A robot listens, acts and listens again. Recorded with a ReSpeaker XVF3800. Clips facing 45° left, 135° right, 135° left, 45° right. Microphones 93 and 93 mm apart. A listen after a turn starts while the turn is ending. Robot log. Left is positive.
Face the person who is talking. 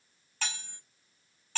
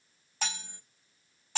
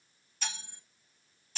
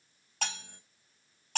cmd idle
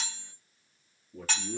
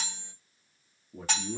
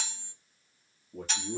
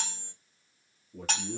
note: The man speaking: 160° left.
cmd yaw +160
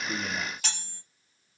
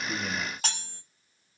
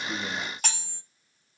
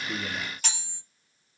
cmd idle
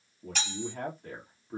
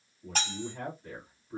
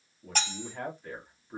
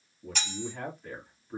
note: The man speaking is now 40° left.
cmd yaw +40
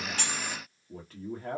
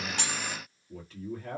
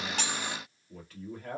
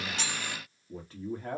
end: Found it: a man speaking, straight ahead, 1 to 2 m away.